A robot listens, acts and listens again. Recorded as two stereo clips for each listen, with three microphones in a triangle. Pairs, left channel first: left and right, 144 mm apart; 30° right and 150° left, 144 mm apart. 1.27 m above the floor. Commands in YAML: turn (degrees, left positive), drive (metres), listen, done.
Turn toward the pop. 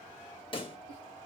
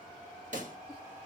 turn: 135
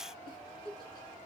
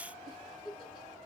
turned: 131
done: "Facing where the pop came from. I can't hear it now."